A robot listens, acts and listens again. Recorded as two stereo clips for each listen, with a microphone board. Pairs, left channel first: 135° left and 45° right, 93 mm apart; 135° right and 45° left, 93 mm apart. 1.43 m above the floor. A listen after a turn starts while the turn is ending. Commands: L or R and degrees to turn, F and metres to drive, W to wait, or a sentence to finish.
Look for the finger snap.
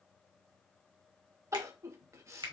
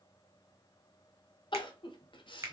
R10
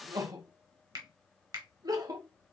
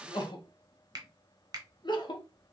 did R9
Facing the finger snap.